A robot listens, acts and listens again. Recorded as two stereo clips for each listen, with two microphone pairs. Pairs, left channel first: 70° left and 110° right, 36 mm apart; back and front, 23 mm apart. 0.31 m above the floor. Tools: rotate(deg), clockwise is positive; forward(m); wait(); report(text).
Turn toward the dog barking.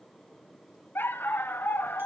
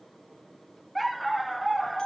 rotate(-90)
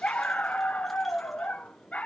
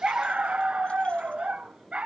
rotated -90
rotate(-20)
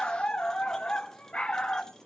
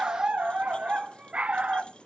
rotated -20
report("Facing the dog barking, under 1 m away.")